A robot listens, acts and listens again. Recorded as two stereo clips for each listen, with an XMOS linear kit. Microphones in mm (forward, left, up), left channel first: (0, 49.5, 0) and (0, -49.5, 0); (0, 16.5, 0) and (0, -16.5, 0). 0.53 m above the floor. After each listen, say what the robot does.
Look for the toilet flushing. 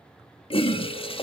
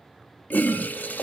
Turn 70° left.
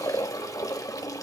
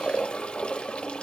Turn 35° left.
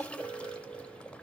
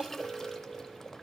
Turn 10° left.
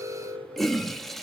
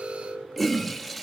Found it: a toilet flushing, straight ahead.